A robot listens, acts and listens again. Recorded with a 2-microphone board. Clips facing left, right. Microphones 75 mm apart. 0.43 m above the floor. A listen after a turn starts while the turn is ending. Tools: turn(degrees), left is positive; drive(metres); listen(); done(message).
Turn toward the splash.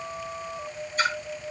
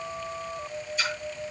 turn(degrees=45)
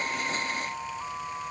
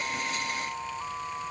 listen()
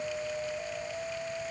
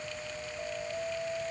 done("I heard a splash, but can't make it out now. It was about straight ahead or 90° left.")